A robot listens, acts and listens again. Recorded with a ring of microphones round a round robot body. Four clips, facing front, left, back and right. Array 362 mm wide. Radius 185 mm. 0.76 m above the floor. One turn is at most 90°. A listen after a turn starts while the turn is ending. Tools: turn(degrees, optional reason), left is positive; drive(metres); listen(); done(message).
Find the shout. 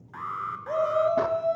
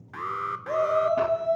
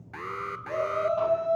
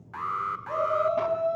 turn(degrees=45, reason="The shout: 45° left.")
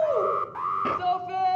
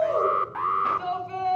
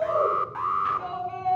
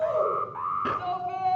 done("Found it: a shout, straight ahead.")